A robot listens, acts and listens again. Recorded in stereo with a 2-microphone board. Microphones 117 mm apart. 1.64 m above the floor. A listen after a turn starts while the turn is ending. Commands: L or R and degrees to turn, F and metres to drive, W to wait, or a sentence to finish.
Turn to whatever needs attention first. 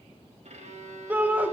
R30
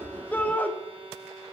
L15
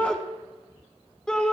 Facing the shout.